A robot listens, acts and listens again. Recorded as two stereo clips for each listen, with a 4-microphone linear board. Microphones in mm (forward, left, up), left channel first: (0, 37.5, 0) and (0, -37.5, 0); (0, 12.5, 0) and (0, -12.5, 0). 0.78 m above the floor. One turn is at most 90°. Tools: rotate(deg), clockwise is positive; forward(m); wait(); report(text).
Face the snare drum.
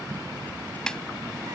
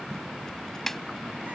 rotate(-30)
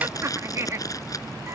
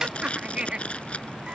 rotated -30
wait()
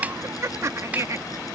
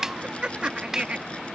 rotate(20)
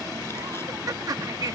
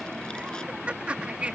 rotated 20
wait()
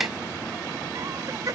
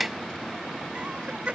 wait()
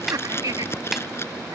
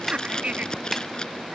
report("Found it: a snare drum, straight ahead.")